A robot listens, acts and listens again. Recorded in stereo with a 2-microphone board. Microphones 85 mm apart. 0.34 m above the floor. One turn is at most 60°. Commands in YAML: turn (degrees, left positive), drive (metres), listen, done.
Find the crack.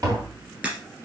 turn: -20
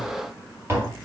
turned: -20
listen: true
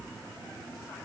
done: "I heard a crack, but can't make it out now. It was about straight ahead or 140° right."